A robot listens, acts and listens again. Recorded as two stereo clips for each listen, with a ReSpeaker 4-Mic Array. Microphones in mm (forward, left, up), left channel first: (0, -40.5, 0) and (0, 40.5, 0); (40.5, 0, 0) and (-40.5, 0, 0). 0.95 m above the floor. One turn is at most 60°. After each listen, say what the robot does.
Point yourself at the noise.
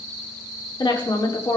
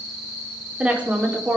Turn 60° right.
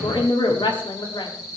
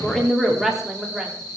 Turn 60° right.
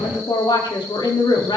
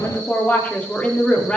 Turn 60° right.
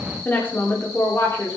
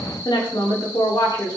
Turn 30° right.
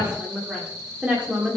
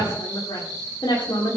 Turn 15° left.
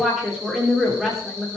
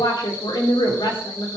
Found it: a woman speaking, straight ahead, 2 to 4 m away.